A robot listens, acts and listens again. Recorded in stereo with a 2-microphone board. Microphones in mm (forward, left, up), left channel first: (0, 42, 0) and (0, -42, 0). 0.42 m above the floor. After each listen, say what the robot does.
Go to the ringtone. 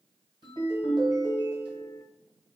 Turn 70° right.
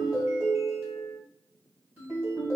Turn 30° right.
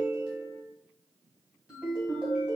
Turn 15° right.
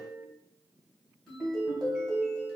Drive 1.0 m forward.
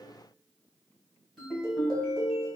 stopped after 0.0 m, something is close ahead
Blocked. The ringtone is further on, straight ahead.